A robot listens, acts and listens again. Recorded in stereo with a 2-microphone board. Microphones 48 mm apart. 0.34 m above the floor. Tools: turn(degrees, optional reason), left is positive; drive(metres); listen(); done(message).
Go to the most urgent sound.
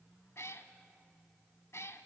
listen()
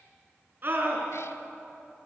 turn(degrees=-40, reason="The scream: about 40° right or 140° right.")
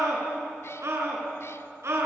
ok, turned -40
turn(degrees=-95, reason="So it is at 95° right.")
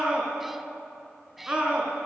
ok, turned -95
turn(degrees=-25, reason="The scream is now 25° right.")
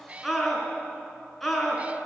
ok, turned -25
drive(metres=1.0)
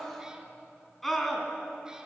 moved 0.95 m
drive(metres=1.0)
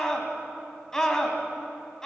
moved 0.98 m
turn(degrees=10, reason="The scream is now 10° left.")
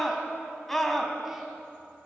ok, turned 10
drive(metres=1.0)
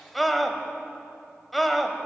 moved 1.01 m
drive(metres=1.0)
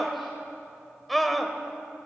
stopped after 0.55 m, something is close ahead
done("Arrived at the scream, straight ahead.")